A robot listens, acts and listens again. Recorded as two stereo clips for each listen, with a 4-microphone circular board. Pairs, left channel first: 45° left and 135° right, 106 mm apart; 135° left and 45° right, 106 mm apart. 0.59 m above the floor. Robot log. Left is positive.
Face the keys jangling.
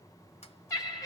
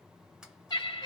cmd idle
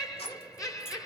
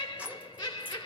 note: The keys jangling: 30° left.
cmd yaw +30
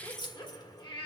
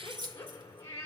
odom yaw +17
end: Facing the keys jangling.